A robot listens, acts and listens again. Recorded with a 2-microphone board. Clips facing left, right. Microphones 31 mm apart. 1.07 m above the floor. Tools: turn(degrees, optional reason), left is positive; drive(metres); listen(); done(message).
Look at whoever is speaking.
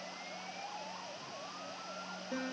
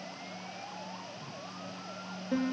listen()
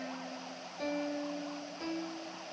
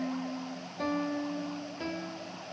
listen()
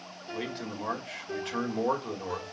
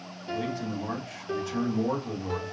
turn(degrees=55, reason="The man speaking: about 55° left or 125° left.")
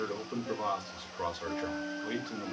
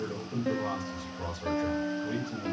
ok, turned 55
turn(degrees=60, reason="So it is at 60° left.")
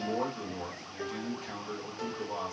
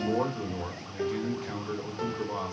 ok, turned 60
turn(degrees=-15, reason="The man speaking is now 15° right.")
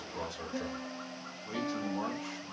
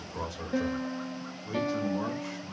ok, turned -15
done("Facing the man speaking.")